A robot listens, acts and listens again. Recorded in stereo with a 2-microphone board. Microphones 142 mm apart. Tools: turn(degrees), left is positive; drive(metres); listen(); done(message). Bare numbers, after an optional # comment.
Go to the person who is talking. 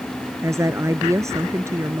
# The woman speaking: about 20° right or 160° right.
turn(-20)
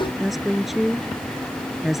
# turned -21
drive(1.0)
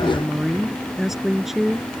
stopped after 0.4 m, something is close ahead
done("Blocked. The woman speaking is further on, straight ahead.")